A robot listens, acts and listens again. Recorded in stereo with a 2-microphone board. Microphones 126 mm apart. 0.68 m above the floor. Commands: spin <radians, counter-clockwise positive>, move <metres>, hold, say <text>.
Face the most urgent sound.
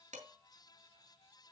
hold
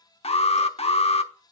spin 0.96
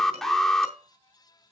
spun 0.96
say Found it: an alarm, straight ahead.